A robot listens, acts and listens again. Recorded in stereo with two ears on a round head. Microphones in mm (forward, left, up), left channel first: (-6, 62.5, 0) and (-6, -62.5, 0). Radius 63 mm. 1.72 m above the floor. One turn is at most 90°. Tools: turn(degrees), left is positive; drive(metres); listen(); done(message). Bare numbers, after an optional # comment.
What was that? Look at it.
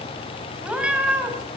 turn(-30)
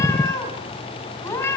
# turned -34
# So it is at 20° left.
turn(20)
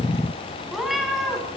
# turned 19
done("Facing the cat meowing.")